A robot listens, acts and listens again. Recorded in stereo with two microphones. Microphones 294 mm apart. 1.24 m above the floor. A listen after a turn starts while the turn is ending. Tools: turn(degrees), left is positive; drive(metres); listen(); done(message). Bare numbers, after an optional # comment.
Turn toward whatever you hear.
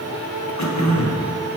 # The throat clearing: about 60° left or 120° left.
turn(60)
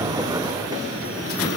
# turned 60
listen()
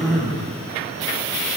done("Facing the throat clearing.")